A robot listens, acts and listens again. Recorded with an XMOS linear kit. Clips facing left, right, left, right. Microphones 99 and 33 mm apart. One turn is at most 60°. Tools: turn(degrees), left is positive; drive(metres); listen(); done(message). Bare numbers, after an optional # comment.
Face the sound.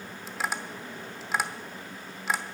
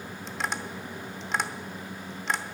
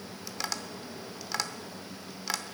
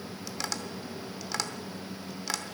turn(30)
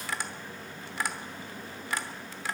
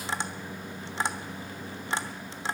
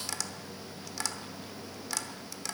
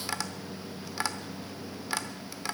# So it is at 25° right.
turn(-25)
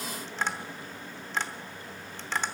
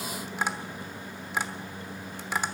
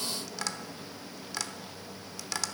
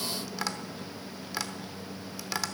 # The tapping is now 10° right.
turn(-10)
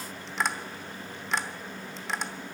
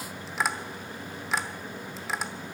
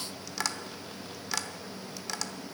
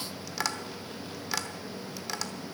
done("Found it: tapping, straight ahead.")